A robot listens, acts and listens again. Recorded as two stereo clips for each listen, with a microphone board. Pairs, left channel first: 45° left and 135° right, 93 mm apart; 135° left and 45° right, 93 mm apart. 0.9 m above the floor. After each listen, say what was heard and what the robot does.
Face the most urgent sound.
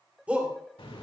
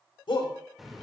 The shout: 150° left. Turn 150° left.
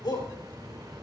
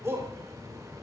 The shout is now 15° left. Turn 15° left.
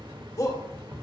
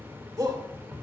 Facing the shout, 2 to 4 m away.